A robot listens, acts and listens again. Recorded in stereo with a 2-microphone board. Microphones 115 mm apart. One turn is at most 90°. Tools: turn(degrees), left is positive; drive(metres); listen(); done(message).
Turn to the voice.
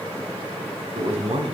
turn(degrees=-70)
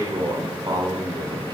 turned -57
turn(degrees=-40)
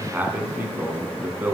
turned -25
turn(degrees=-20)
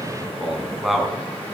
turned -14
done("Found it: a man speaking, straight ahead, 2 to 4 m away.")